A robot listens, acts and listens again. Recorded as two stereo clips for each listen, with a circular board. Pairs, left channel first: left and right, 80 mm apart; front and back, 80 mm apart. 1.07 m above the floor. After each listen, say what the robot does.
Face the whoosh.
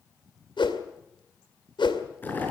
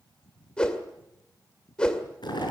Turn 80° left.
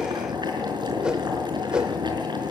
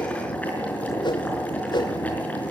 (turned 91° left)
Turn 10° right.
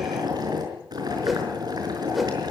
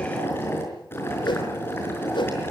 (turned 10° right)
Facing the whoosh, 2 to 4 m away.